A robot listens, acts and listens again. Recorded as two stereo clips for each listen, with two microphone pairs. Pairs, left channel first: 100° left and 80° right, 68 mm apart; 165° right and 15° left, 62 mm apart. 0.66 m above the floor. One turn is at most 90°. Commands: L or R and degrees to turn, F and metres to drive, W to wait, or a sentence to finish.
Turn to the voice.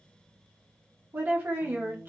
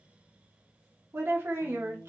R25
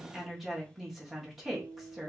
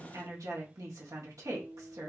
Facing the woman speaking.